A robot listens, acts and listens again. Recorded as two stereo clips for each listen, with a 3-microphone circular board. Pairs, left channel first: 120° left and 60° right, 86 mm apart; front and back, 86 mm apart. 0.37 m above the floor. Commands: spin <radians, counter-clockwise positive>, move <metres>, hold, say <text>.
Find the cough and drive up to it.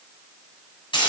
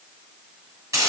hold
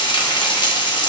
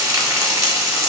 hold
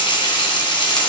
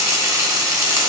say I can't make out a cough to turn to.